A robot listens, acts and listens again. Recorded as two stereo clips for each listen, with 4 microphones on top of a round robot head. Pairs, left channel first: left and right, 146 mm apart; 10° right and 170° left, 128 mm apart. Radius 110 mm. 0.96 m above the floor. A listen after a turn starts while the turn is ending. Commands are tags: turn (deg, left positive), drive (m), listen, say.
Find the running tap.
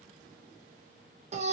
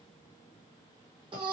<listen/>
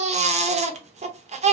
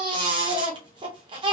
<listen/>
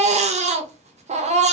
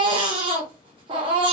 <say>I can't make out a running tap to turn to.</say>